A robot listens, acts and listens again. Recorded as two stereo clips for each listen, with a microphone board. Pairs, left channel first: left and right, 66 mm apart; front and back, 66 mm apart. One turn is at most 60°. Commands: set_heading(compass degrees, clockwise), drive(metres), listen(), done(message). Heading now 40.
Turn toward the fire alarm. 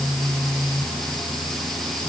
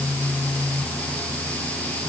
listen()
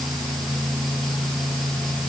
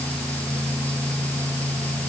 listen()
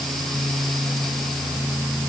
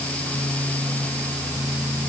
done("I can't make out a fire alarm.")